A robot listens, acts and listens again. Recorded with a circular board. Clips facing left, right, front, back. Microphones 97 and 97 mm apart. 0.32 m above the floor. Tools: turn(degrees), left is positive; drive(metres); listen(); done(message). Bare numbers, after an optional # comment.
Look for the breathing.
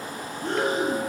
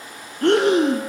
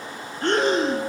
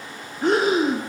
# The breathing: 95° right.
turn(-95)
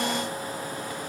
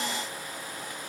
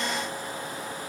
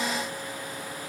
listen()
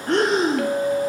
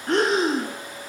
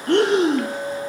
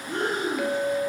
done("Found it: breathing, straight ahead.")